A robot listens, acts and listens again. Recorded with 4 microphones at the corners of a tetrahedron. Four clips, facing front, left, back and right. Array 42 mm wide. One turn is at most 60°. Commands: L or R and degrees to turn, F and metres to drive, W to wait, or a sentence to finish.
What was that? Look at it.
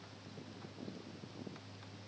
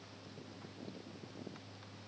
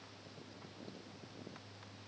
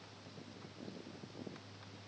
W
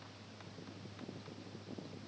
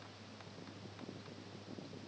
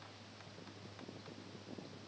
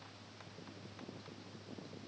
W
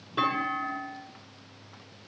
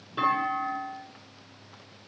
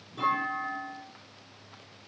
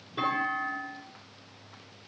L20
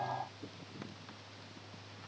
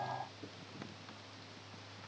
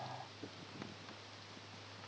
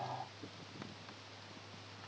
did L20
Facing where the clunk came from. I can't hear it now.